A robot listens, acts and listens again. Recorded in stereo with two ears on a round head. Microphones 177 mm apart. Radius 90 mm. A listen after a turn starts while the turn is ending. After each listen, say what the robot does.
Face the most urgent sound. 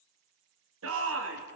Turn 90° right.
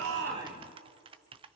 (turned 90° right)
Keep listening.
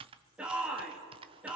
Found it: a shout, straight ahead, 2 to 4 m away.